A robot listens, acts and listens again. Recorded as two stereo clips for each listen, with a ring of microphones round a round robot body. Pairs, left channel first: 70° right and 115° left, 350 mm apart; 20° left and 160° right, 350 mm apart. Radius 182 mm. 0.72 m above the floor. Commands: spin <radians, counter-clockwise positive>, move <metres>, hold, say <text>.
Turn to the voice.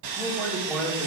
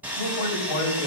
spin 0.44
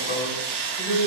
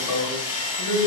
say Facing the man speaking.